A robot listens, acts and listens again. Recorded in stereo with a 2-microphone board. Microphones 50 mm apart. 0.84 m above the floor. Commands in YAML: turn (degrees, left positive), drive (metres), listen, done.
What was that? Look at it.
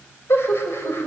turn: 55
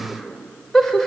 turn: 10
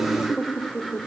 done: "Found it: laughter, straight ahead, 2 to 4 m away."